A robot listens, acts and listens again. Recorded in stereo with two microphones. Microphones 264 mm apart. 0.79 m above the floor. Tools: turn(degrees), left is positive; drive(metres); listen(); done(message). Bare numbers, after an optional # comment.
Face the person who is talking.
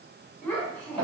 turn(30)
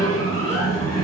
listen()
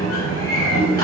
listen()
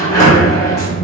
done("I heard a child speaking, but can't make it out now. It was about 25° right or 145° left.")